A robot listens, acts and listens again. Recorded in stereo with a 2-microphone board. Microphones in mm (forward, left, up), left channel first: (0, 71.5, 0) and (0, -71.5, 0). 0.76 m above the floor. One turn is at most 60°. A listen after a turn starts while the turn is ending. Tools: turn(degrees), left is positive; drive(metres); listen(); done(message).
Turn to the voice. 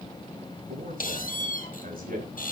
turn(degrees=-60)
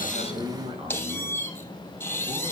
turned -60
turn(degrees=-35)
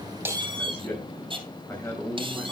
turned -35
turn(degrees=15)
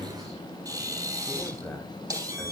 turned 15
done("Facing the man speaking.")